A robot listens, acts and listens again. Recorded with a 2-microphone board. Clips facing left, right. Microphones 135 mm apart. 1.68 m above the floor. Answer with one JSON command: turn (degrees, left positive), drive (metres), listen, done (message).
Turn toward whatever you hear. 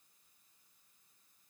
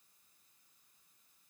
{"listen": true}
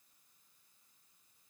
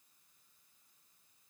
{"listen": true}
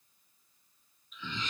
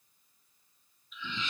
{"turn": 45}
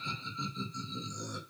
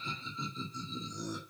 {"done": "Facing the laughter."}